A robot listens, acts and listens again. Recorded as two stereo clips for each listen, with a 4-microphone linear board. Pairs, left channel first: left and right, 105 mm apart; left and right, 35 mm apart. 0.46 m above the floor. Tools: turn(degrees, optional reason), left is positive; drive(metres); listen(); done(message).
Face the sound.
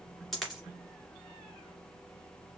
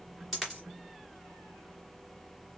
turn(degrees=30)
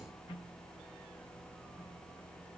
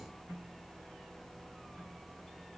listen()
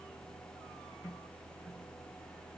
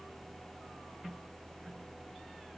done("I heard a dropped coin, but can't make it out now. It was about 30° right or 150° left.")